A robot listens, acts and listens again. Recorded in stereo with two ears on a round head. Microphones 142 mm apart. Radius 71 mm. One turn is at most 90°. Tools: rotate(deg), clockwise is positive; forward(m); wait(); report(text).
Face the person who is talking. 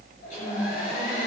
rotate(-20)
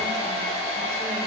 wait()
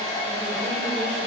wait()
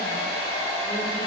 report("I heard a woman speaking, but can't make it out now. It was about straight ahead or 140° left.")